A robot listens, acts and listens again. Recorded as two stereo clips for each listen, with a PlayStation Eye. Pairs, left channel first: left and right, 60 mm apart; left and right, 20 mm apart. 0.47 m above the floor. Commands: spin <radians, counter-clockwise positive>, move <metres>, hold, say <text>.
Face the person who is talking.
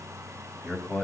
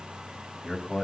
spin 0.52
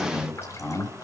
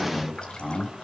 spin 2.36
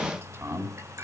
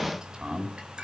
spin -0.79
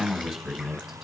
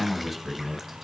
say Facing the man speaking.